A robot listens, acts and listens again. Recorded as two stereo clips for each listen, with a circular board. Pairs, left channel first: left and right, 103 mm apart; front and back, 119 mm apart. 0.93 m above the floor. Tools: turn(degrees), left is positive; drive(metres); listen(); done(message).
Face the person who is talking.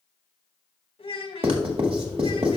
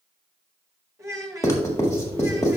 turn(degrees=115)
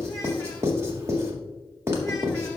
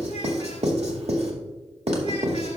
listen()
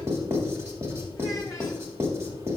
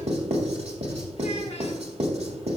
listen()
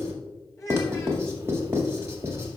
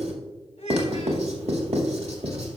turn(degrees=30)
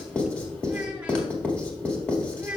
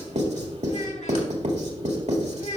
turn(degrees=-10)
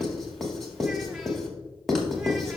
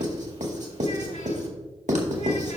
listen()
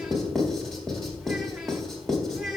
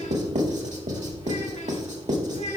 listen()
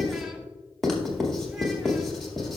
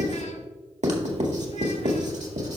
done("I heard a child speaking from this way, but can't make it out now.")